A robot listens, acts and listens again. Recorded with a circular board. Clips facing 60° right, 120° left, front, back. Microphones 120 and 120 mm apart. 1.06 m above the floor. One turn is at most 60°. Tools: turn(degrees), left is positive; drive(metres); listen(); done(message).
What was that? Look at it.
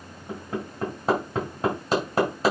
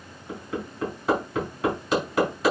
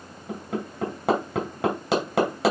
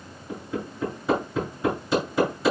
done("Facing the hammering, over 4 m away.")